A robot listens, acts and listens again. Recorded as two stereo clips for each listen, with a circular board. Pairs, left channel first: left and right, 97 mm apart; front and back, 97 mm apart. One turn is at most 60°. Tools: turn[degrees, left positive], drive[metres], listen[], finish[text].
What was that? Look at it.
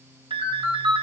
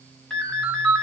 Thought: The ringtone: 80° right.
Action: turn[-60]
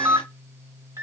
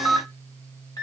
Thought: The ringtone is now 40° right.
Action: turn[-40]
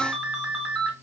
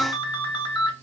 Action: finish[Found it: a ringtone, straight ahead.]